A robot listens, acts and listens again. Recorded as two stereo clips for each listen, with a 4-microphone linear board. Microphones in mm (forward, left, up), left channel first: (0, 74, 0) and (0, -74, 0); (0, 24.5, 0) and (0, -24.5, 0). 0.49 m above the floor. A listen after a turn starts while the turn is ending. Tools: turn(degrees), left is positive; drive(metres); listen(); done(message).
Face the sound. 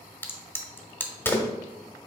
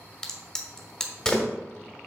turn(degrees=30)
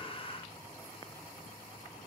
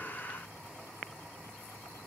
listen()
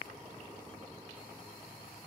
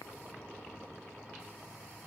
done("I heard a crack, but can't make it out now. It was about 15° right or 135° left.")